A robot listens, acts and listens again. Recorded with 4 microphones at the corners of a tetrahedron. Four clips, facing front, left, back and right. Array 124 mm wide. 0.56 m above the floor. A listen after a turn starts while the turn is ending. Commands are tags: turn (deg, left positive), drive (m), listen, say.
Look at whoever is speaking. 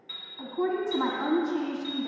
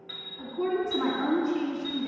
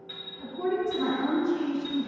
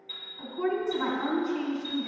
<say>Found it: a woman speaking, straight ahead, 2 to 4 m away.</say>